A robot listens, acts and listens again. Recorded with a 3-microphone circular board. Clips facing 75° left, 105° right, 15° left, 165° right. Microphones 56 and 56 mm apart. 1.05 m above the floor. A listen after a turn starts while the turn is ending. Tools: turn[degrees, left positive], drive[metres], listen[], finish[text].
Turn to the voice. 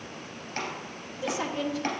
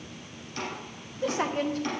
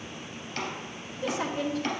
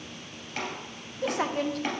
Thought: The woman speaking: 145° right.
Action: turn[-145]
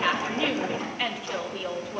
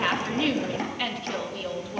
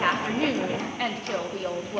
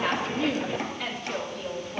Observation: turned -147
Action: finish[Found it: a woman speaking, straight ahead.]